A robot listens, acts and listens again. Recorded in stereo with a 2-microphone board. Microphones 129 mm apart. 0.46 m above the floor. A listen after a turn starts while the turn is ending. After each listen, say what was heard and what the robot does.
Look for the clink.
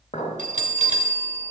The clink: about 60° left or 120° left. Turn 60° left.
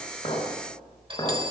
So it is at 45° left. Turn 45° left.
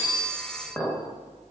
The clink is now 10° left. Turn 10° left.
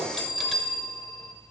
Keep listening.
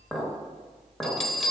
Facing the clink, 1 to 2 m away.